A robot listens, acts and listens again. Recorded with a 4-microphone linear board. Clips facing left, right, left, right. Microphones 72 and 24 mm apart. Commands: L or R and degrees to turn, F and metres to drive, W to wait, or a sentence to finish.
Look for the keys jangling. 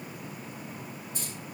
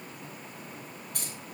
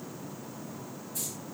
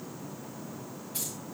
R70
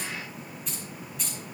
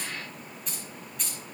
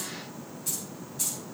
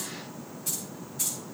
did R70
Facing the keys jangling.